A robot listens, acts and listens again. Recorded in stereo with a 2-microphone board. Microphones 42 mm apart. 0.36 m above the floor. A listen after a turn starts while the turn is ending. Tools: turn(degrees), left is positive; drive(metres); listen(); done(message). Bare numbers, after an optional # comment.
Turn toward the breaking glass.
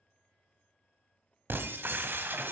# The breaking glass: about 55° right or 125° right.
turn(-55)
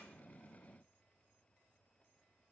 listen()
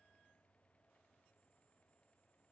done("I heard breaking glass, but can't make it out now. It was about straight ahead or 70° right.")